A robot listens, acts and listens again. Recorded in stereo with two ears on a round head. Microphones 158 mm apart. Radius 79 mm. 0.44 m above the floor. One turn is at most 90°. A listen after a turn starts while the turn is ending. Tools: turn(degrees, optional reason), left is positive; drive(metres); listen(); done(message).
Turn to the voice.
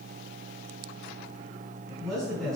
turn(degrees=30)
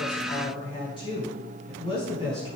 turn(degrees=90, reason="So it is at 150° left.")
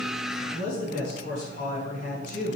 turn(degrees=55, reason="The man speaking is now 55° left.")
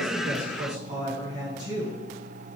turn(degrees=-25, reason="The man speaking is now 25° right.")
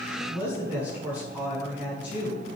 turn(degrees=-10, reason="The man speaking is now 10° right.")
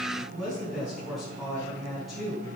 done("Found it: a man speaking, straight ahead, over 4 m away.")